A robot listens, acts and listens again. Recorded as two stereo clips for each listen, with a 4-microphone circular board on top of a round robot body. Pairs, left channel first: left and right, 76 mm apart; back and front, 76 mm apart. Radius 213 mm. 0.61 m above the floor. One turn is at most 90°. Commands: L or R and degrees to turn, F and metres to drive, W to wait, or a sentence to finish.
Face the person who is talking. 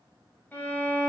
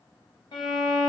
W
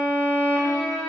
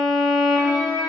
W
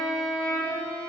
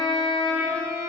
I can't make out anyone speaking to turn to.